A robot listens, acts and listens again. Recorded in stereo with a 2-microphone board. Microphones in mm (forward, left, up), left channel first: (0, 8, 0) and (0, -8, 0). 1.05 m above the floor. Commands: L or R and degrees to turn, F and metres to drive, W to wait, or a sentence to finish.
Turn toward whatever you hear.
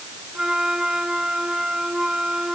R45
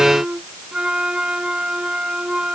R90
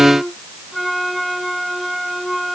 Facing the flute.